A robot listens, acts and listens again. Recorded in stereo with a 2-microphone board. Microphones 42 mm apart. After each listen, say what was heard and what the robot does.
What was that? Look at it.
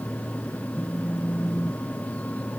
The phone buzzing: about 30° left or 150° left. Turn 30° left.
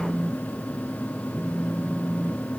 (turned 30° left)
Found it: a phone buzzing, straight ahead.